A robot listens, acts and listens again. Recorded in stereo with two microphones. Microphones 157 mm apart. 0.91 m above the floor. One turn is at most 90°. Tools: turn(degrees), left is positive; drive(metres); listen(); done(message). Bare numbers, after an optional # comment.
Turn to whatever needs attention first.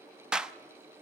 listen()
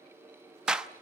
listen()
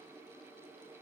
done("I can't make out anything urgent, only a clap.")